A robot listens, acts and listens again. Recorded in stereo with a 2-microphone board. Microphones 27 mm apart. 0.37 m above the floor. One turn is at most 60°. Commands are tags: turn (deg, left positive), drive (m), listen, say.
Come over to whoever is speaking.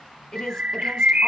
<turn deg="20"/>
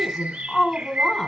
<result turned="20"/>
<drive m="1.0"/>
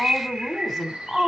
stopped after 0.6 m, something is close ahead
<say>Blocked. The woman speaking is further on, straight ahead.</say>